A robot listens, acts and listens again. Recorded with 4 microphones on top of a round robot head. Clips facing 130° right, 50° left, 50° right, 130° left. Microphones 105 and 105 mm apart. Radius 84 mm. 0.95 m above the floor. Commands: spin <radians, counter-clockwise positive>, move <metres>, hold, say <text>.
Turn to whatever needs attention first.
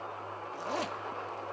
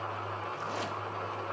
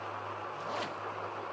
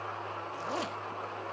hold
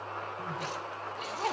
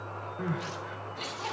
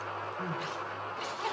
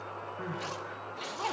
spin 0.96
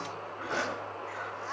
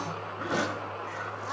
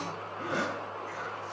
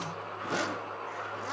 hold
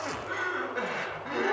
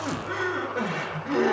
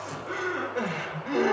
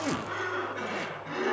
say Facing the crying.